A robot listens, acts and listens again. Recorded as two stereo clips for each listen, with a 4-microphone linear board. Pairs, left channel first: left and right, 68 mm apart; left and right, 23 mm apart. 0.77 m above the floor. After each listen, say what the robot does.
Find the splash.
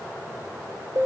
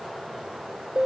Keep listening.
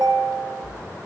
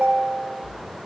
Turn 50° right.
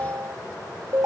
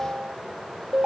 Keep listening.
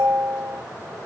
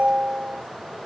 I heard a splash, but can't make it out now. It was about straight ahead or 80° right.